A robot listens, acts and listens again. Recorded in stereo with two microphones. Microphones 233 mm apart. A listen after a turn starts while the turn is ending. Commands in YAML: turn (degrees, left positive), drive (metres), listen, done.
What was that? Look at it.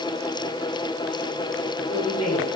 turn: 90
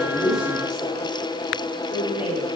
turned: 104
turn: -10
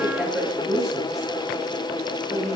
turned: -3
done: "Facing the woman speaking, over 4 m away."